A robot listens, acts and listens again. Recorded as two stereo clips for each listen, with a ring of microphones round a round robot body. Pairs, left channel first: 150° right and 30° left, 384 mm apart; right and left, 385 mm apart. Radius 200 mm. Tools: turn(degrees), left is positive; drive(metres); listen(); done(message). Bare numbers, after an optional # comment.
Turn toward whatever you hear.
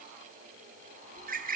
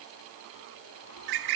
# The bird: 95° left.
turn(95)
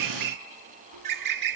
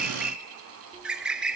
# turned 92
done("Facing the bird.")